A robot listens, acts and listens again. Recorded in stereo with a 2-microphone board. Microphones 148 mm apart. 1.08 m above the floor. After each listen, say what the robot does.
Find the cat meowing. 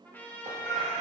Turn 40° left.
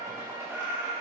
Turn 15° right.
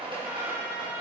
Keep listening.
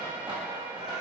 Keep listening.
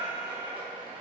Turn 30° right.
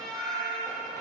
Turn 25° right.
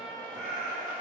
Turn 15° right.
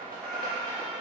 Facing the cat meowing, 2 to 4 m away.